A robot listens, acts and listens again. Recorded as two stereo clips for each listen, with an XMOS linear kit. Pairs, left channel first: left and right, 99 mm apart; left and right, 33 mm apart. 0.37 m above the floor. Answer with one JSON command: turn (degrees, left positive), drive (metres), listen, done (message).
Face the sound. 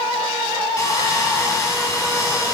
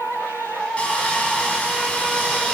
{"turn": 35}
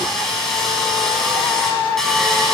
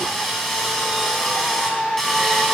{"done": "Found it: sawing, straight ahead."}